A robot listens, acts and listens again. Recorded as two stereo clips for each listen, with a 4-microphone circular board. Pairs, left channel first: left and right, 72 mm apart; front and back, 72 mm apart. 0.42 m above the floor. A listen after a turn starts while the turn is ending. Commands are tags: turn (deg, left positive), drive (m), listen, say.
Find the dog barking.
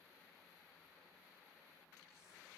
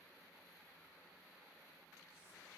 <listen/>
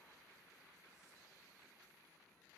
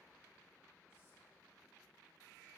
<listen/>
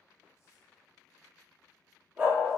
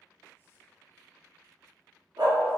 <turn deg="-155"/>
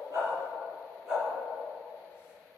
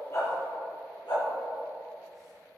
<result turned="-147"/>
<say>Found it: a dog barking, straight ahead, 2 to 4 m away.</say>